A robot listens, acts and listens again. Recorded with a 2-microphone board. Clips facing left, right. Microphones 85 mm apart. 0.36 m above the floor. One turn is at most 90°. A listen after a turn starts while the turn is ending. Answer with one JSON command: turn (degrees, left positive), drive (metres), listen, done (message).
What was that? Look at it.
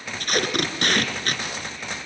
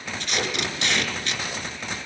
{"turn": 50}
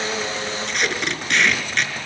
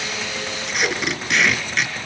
{"done": "Found it: tape being pulled, straight ahead."}